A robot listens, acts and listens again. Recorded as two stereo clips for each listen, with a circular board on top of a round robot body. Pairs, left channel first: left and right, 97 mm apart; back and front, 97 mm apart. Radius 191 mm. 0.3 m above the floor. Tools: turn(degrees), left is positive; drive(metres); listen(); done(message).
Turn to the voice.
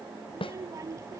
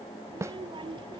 turn(degrees=-35)
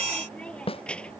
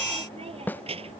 turn(degrees=10)
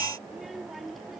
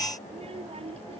done("Facing the child speaking.")